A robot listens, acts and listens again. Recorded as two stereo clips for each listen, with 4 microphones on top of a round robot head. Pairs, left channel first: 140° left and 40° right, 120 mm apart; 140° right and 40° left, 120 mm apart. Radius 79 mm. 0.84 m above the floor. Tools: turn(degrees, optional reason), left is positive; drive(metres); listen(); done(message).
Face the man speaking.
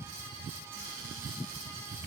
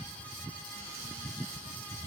listen()
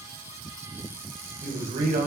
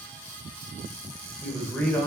turn(degrees=-60, reason="The man speaking: 60° right.")
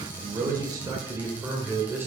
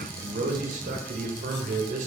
turn(degrees=35, reason="The man speaking is now 35° left.")
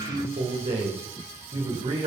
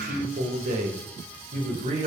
done("Facing the man speaking, 2 to 4 m away.")